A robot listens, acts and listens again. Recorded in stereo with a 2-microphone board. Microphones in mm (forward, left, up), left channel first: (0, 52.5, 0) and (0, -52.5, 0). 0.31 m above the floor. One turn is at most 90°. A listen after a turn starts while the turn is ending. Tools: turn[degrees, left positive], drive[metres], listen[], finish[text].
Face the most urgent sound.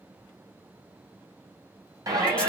Thought: The shout: about 35° right or 145° right.
Action: turn[-35]
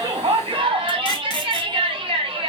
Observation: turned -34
Thought: So it is at 100° right.
Action: turn[-90]
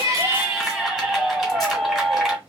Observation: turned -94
Action: finish[Found it: a shout, straight ahead.]